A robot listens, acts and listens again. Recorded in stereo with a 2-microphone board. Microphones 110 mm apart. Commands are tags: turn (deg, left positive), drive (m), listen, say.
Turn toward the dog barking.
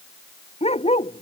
<turn deg="70"/>
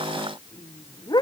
<turn deg="40"/>
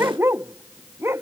<turn deg="-20"/>
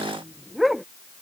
<say>Facing the dog barking.</say>